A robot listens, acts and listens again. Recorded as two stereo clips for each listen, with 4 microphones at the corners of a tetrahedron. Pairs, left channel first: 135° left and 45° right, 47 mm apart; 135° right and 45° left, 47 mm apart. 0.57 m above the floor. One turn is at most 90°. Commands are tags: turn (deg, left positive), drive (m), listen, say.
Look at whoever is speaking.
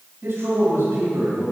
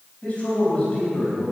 <turn deg="-70"/>
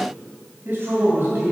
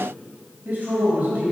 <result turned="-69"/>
<say>Facing the man speaking, 2 to 4 m away.</say>